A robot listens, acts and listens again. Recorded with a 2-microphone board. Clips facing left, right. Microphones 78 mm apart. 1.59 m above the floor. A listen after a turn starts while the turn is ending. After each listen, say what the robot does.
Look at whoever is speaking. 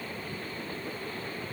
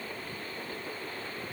Keep listening.
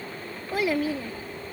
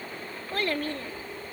Turn 30° left.
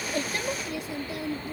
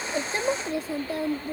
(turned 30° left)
Turn 40° right.
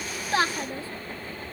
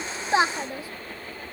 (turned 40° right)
Turn 15° right.
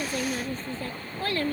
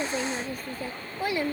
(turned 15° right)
Turn 15° right.
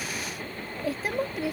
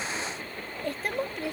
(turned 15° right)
Facing the child speaking.